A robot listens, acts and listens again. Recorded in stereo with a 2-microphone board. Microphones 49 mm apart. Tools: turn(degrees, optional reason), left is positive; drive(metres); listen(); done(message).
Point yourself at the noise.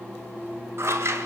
turn(degrees=-65, reason="The scissors: about 65° right or 115° right.")
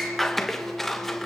done("Found it: scissors, straight ahead.")